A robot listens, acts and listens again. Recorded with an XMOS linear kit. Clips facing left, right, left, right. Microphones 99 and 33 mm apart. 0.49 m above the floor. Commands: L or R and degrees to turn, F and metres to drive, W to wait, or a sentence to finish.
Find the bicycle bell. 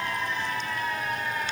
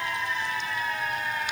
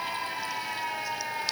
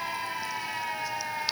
W
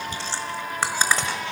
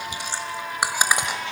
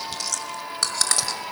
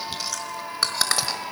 W
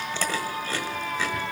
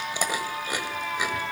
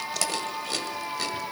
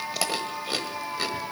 I can't make out a bicycle bell to turn to.